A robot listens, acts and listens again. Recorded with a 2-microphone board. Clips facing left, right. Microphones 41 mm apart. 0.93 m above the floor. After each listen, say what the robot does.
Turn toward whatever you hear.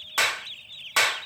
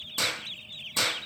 Turn 75° left.
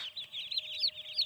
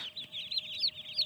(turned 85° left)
Keep listening.
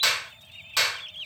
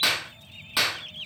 Turn 10° right.
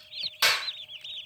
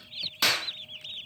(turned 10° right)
Found it: a clap, straight ahead.